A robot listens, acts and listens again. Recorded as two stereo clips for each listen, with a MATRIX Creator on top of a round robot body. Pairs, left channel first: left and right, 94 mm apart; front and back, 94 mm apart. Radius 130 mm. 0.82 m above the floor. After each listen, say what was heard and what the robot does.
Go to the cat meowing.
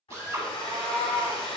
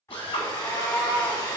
The cat meowing: 85° right. Turn 85° right.
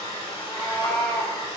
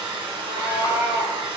Drive 1.0 m forward.
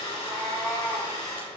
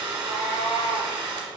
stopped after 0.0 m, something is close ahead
Blocked. The cat meowing is further on, straight ahead.